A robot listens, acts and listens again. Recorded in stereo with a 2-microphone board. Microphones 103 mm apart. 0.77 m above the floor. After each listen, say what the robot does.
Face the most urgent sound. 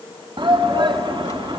Turn 50° right.
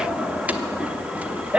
Turn 15° right.
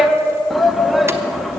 Found it: a shout, straight ahead, under 1 m away.